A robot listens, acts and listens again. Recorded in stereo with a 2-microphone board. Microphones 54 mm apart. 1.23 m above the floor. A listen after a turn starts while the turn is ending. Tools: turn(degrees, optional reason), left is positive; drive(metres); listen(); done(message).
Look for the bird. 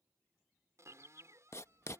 turn(degrees=-70, reason="The bird: about 70° right or 110° right.")
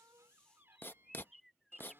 done("Found it: a bird, straight ahead.")